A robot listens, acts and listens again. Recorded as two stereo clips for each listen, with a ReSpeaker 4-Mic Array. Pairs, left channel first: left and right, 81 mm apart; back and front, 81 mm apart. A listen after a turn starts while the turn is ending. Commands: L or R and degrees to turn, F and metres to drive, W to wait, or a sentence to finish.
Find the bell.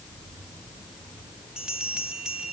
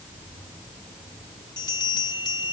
R170
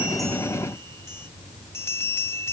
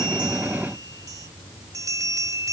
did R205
L35
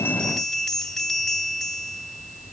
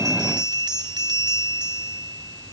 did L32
Facing the bell.